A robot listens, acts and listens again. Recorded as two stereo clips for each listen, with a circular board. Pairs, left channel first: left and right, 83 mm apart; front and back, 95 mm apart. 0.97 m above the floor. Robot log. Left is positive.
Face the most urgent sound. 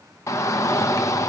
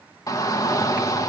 note: The shout: 45° left.
cmd yaw +45
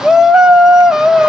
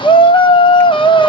end: Facing the shout.